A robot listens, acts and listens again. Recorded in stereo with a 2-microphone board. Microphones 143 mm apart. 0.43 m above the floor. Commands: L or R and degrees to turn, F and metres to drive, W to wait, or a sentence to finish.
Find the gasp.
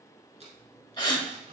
L30
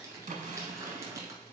W
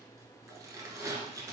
I heard a gasp, but can't make it out now. It was about straight ahead or 120° left.